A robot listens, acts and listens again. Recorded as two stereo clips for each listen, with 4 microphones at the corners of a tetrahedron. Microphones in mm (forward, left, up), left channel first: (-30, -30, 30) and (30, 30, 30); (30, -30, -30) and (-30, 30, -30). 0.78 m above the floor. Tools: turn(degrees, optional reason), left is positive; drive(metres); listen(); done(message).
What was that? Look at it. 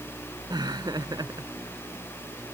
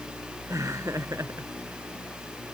turn(degrees=80, reason="The laughter: 80° left.")
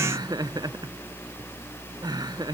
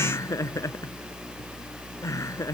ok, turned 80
done("Facing the laughter.")